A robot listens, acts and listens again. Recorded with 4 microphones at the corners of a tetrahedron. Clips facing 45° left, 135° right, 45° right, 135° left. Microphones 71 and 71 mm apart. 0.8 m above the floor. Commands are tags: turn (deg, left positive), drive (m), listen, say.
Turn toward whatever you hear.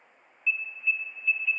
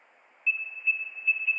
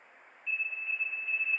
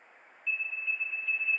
<turn deg="145"/>
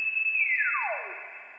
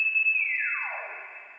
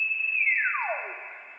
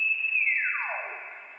<say>Found it: an alarm, straight ahead.</say>